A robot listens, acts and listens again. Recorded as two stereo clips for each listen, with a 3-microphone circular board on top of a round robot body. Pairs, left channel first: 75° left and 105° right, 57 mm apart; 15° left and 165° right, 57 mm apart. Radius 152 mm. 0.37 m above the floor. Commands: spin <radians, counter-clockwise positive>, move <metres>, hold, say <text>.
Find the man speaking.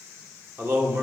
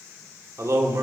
spin -2.53
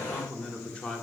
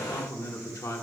say Found it: a man speaking, straight ahead.